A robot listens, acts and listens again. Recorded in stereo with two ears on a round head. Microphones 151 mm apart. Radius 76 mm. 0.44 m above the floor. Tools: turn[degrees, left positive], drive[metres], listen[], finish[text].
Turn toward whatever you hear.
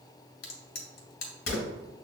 Thought: The crack: about 60° left or 120° left.
Action: turn[60]
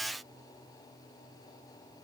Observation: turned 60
Action: listen[]
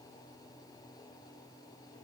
Action: finish[I heard a crack, but can't make it out now. It was about straight ahead or 60° left.]